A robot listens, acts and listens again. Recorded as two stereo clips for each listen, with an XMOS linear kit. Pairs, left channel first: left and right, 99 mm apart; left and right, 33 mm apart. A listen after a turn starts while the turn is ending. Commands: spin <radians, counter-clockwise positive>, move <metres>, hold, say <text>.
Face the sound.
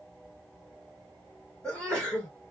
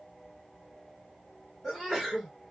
spin 0.52
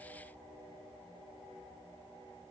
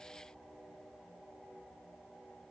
hold
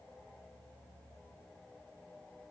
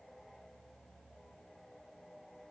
say I heard a sneeze, but can't make it out now. It was about 20° right or 140° left.